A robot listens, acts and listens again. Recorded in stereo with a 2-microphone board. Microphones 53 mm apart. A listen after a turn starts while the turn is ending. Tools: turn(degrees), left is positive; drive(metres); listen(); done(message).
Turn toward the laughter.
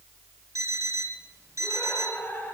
turn(degrees=35)
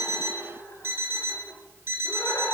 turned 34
turn(degrees=105)
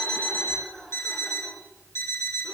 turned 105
turn(degrees=-15)
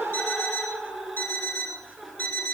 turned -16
done("Facing the laughter, over 4 m away.")